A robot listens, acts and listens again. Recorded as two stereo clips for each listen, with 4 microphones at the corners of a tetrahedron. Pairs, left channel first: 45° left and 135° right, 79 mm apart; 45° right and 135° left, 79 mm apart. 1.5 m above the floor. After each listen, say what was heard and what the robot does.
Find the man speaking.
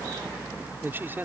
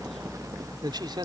The man speaking: 160° left. Turn 160° left.
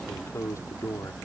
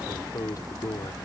The man speaking is now 10° right. Turn 10° right.
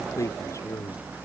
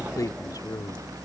Facing the man speaking.